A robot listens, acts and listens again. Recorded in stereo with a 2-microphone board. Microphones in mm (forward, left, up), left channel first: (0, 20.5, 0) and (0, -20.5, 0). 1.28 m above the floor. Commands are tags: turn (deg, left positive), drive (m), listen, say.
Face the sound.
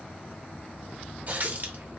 <turn deg="-45"/>
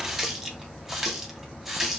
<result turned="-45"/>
<turn deg="-10"/>
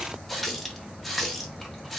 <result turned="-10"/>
<say>Facing the running tap.</say>